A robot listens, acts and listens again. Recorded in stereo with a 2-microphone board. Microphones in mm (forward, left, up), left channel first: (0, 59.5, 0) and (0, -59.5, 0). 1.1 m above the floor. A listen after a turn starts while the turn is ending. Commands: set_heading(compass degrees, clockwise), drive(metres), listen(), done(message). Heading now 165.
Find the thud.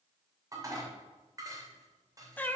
listen()
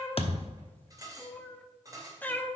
set_heading(110)
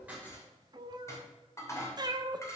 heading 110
listen()
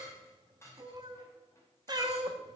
done("I heard a thud, but can't make it out now. It was about straight ahead or 70° left.")